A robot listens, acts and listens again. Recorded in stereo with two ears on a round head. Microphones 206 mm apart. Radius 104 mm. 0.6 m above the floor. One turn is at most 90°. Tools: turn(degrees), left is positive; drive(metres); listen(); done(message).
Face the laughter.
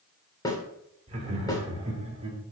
turn(degrees=-25)
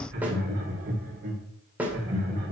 turn(degrees=-90)
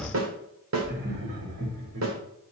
turn(degrees=-45)
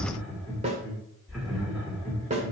done("Found it: laughter, straight ahead.")